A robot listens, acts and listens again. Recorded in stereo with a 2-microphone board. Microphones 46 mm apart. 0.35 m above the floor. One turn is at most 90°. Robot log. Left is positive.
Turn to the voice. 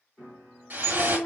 note: The child speaking: about 45° left or 135° left.
cmd yaw +45
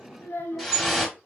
note: So it is at 70° left.
cmd yaw +70
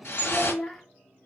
note: The child speaking is now 10° left.
cmd yaw +10
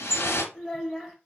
end: Found it: a child speaking, straight ahead, under 1 m away.